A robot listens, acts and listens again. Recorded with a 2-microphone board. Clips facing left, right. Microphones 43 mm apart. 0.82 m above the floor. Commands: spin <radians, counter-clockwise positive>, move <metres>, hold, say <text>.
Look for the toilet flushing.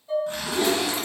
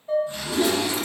spin 0.52
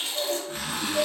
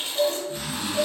spin -0.52
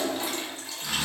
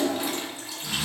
spin -0.26
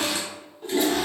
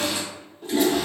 say Found it: a toilet flushing, straight ahead.